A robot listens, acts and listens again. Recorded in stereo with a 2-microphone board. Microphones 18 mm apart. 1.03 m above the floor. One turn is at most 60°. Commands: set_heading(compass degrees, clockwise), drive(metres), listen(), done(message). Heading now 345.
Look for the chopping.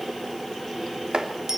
set_heading(45)
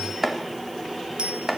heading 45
set_heading(60)
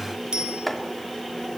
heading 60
done("Facing the chopping, 2 to 4 m away.")